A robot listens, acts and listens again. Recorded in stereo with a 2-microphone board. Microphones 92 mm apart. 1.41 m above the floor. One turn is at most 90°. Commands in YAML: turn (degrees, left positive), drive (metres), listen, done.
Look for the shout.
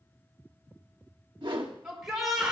turn: -30
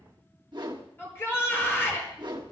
turn: 25
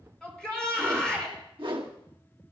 turn: 10
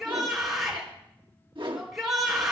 done: "Facing the shout, over 4 m away."